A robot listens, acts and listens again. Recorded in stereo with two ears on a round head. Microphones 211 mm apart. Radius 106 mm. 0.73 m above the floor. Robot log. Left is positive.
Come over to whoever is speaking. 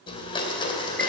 cmd idle
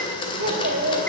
note: The child speaking: about 40° right or 140° right.
cmd yaw -40
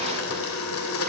cmd idle
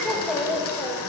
cmd fwd 1.0
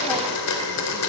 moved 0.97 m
cmd idle
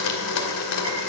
cmd idle
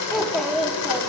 cmd fwd 1.0
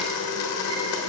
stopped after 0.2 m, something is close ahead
cmd idle
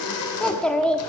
end: Arrived at the child speaking, straight ahead.